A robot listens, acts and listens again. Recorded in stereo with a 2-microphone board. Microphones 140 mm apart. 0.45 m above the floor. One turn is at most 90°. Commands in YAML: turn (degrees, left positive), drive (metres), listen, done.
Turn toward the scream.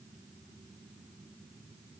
listen: true
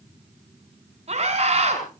turn: -50
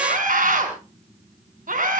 turn: -80
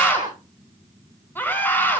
turn: 15
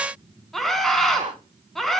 done: "Facing the scream."